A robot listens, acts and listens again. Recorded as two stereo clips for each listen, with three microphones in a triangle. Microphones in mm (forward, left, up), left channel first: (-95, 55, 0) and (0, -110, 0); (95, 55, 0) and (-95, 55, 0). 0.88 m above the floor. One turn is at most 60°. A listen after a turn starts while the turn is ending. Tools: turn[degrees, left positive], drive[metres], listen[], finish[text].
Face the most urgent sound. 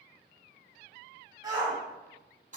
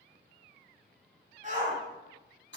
Thought: The shout: 130° right.
Action: turn[-60]
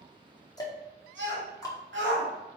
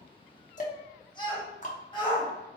Thought: The shout is now 65° right.
Action: turn[-60]
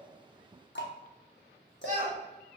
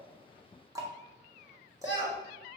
Thought: The shout is now 10° right.
Action: turn[-10]
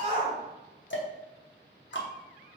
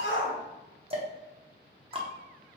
Action: finish[Facing the shout.]